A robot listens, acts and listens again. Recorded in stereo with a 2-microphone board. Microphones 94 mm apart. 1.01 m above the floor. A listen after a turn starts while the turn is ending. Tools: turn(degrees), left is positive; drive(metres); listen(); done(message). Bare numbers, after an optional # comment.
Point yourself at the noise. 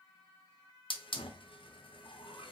# The hiss: about 70° left or 110° left.
turn(70)
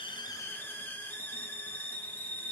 # So it is at 25° left.
turn(25)
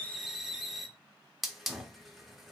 done("Found it: a hiss, straight ahead, under 1 m away.")